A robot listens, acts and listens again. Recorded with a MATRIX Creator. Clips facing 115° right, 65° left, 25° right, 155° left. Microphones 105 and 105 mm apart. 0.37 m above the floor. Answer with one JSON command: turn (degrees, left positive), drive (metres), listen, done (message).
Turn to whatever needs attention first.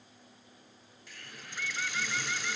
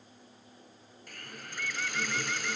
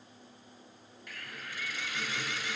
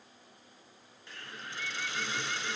{"listen": true}
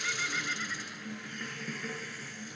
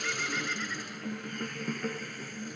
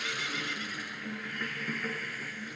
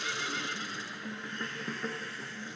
{"listen": true}
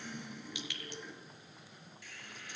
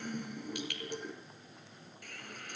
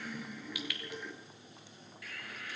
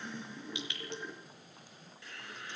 {"done": "I can't make out anything urgent, only a hiss and a bird."}